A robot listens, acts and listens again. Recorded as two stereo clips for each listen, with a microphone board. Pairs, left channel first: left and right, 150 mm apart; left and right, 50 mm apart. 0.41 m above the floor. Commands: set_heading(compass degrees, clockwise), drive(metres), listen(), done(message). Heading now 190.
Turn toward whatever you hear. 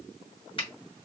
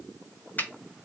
set_heading(150)
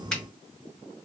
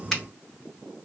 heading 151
set_heading(141)
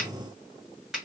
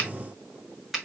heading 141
done("Found it: a finger snap, straight ahead, 1 to 2 m away.")